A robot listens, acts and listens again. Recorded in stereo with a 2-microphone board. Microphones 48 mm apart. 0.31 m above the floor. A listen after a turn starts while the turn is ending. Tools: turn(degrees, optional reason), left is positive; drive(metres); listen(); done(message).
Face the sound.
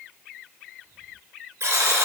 turn(degrees=-90)
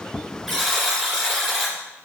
done("Found it: a buzzer, straight ahead.")